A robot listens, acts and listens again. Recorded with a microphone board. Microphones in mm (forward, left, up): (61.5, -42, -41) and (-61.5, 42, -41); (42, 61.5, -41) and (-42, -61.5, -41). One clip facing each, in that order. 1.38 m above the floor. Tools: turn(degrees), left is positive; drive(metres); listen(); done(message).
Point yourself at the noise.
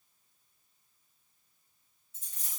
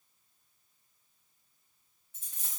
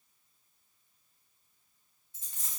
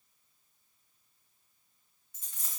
turn(degrees=115)
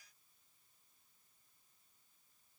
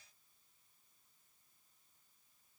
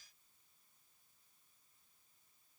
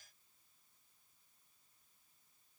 done("I heard a dropped coin from this way, but can't make it out now.")